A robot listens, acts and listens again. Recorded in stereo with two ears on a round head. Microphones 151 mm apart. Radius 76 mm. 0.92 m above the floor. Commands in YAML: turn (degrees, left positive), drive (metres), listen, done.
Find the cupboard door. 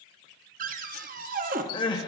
turn: -55
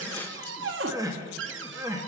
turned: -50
turn: -80
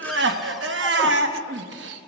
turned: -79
listen: true
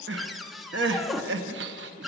done: "Facing the cupboard door."